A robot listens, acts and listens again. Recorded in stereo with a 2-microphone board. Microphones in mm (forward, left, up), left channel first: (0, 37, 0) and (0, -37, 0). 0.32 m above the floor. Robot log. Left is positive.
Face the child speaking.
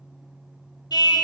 cmd idle
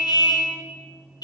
cmd idle
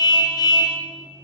end: I can't make out a child speaking, only a car horn.